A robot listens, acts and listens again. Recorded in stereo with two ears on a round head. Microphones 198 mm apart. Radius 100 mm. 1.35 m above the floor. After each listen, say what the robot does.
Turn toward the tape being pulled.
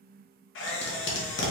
Turn 60° left.
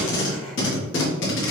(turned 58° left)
Turn 60° left.
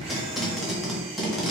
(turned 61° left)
Facing the tape being pulled.